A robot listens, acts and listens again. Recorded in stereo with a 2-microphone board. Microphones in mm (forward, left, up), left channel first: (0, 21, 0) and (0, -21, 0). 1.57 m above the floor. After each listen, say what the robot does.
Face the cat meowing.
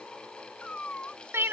Turn 30° left.
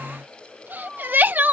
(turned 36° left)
Turn 10° right.
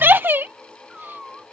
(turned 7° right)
Turn 10° right.
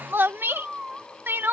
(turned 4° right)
Turn 15° right.
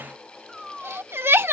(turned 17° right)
Facing the cat meowing.